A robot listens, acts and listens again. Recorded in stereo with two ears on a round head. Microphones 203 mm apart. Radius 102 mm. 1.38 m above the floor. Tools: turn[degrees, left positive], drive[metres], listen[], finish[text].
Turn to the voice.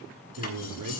Action: turn[-90]
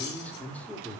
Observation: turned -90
Action: finish[Found it: a man speaking, straight ahead, 2 to 4 m away.]